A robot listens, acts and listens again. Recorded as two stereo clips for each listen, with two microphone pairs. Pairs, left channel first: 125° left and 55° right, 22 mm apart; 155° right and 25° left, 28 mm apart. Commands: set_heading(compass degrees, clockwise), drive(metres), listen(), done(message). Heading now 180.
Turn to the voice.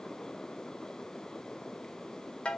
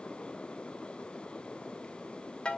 listen()
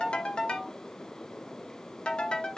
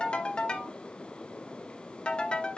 listen()
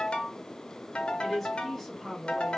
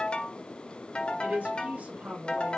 set_heading(155)
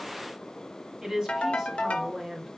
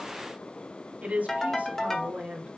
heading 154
done("Facing the woman speaking, 1 to 2 m away.")